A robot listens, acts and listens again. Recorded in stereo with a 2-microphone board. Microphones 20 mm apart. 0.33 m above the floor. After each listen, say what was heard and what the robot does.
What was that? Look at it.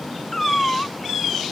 The cat meowing: about 15° left or 165° left. Turn 15° left.
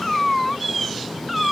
Found it: a cat meowing, straight ahead.